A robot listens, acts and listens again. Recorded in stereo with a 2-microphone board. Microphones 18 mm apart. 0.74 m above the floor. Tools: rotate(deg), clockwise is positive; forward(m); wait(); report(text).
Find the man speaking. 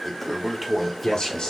rotate(-50)
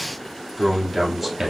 rotate(10)
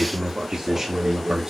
rotate(30)
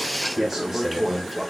rotate(20)
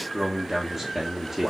rotate(15)
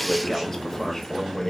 report("Found it: a man speaking, straight ahead.")